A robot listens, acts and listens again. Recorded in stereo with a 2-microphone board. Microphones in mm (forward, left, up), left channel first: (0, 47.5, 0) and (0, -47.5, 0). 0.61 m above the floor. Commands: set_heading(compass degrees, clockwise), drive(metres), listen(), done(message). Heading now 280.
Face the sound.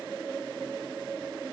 listen()
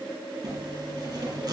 set_heading(325)
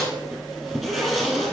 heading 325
done("Facing the zipper, 2 to 4 m away.")